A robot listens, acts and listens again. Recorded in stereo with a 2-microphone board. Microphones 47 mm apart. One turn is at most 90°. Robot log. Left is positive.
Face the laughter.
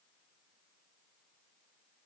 cmd idle
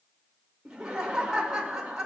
cmd yaw -30
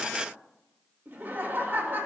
note: So it is at 135° right.
cmd yaw -90
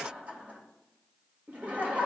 note: The laughter is now 40° right.
cmd yaw -40
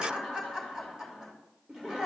note: The laughter is now 15° right.
cmd yaw -15
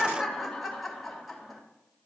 end: Found it: laughter, straight ahead.